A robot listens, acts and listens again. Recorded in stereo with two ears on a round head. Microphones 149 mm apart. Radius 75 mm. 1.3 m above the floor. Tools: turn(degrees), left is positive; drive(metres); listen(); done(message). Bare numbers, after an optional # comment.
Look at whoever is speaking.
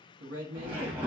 # The man speaking: about 65° right or 115° right.
turn(-65)
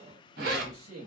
# So it is at 50° right.
turn(-50)
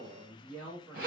done("Facing the man speaking, 1 to 2 m away.")